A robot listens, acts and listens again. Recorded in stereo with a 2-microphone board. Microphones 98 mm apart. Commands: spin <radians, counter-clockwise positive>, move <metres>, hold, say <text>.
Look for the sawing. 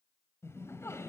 hold
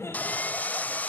spin 0.26
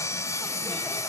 spin 2.62
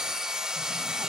say Found it: sawing, straight ahead.